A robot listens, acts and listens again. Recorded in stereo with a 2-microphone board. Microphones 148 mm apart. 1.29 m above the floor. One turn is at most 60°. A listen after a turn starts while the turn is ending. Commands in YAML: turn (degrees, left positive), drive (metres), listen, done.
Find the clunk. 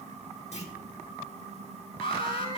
turn: 50
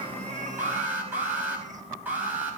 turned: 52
listen: true
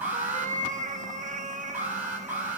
done: "I heard a clunk, but can't make it out now. It was about 5° right or 80° left."